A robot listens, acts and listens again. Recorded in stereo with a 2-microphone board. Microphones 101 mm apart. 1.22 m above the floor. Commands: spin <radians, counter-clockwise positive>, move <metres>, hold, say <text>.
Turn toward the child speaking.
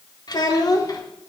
spin 0.61
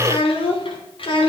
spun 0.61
spin 2.09
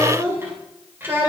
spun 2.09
spin -0.35
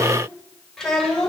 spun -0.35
say Facing the child speaking.